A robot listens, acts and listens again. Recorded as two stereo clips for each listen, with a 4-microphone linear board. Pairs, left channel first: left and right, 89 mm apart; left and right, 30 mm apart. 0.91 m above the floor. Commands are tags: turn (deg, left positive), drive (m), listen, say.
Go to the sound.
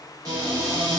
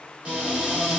<turn deg="-40"/>
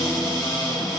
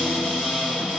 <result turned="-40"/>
<drive m="1.0"/>
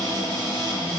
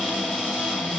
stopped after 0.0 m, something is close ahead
<say>Something is in my way. I am facing the cupboard door but have not reached it.</say>